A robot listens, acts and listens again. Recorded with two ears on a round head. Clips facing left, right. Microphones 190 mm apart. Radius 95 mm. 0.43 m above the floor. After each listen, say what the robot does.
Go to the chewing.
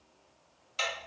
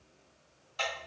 Keep listening.
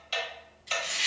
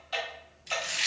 Turn 70° right.
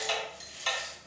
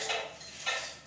Drive 1.0 m forward.
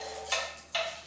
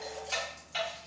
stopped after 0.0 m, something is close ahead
Keep listening.
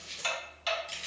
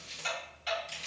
Something is in my way. I am facing the chewing but have not reached it.